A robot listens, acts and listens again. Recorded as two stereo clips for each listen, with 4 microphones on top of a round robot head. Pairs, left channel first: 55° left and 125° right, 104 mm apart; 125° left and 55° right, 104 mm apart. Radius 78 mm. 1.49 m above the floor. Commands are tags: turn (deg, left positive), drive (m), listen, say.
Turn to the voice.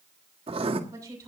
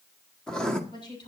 <turn deg="175"/>
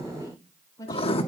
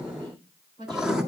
<say>Facing the woman speaking.</say>